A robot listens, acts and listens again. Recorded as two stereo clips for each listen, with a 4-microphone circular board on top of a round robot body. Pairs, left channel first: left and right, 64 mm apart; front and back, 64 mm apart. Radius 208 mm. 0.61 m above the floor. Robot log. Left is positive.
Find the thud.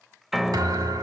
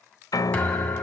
note: The thud: 70° right.
cmd yaw -70
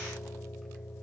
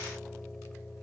end: Facing where the thud came from. I can't hear it now.